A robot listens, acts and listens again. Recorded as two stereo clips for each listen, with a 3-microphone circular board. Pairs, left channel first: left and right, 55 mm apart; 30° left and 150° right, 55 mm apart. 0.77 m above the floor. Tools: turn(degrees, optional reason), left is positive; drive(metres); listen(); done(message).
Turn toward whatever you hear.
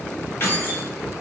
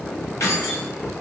turn(degrees=50, reason="The keys jangling: 50° left.")
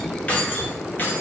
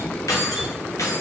turn(degrees=40, reason="The keys jangling is now 40° left.")
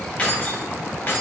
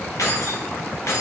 turn(degrees=45, reason="The keys jangling is now 45° left.")
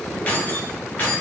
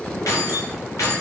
turn(degrees=40, reason="The keys jangling is now 40° left.")
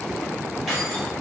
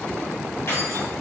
done("Facing the keys jangling.")